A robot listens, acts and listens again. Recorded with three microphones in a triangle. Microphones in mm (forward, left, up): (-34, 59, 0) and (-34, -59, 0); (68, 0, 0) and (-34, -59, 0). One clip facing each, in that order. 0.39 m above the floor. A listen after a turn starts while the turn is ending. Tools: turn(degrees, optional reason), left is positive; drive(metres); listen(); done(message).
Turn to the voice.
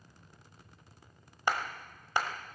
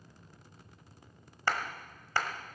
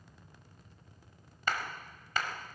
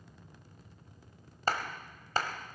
listen()
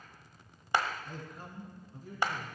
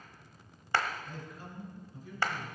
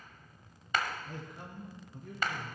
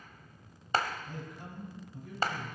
turn(degrees=50, reason="The man speaking: 50° left.")
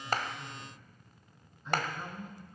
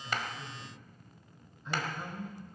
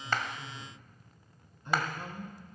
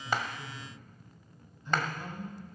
done("Facing the man speaking.")